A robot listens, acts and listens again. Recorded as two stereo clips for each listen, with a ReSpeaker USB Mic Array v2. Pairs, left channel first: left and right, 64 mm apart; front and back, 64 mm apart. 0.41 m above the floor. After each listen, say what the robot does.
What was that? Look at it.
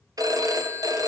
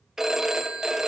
Turn 95° right.
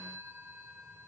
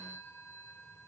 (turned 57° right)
Turn 40° right.
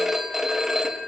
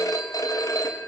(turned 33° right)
Found it: a phone ringing, straight ahead, 2 to 4 m away.